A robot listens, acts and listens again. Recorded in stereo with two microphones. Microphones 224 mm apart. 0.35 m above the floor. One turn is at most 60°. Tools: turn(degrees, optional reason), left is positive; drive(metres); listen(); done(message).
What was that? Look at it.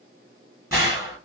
turn(degrees=-30)
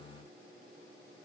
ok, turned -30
listen()
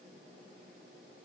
done("I heard a gunshot, but can't make it out now. It was about 15° left or 135° right.")